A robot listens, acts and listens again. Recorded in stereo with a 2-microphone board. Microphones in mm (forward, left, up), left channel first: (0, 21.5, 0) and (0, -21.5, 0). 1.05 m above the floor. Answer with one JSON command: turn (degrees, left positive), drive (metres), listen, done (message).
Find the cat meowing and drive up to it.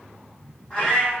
{"turn": 20}
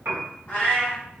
{"turn": 145}
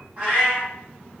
{"turn": -30}
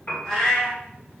{"turn": 15}
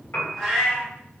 {"drive": 1.0}
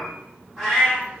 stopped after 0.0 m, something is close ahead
{"done": "Something is in my way. I am facing the cat meowing but have not reached it."}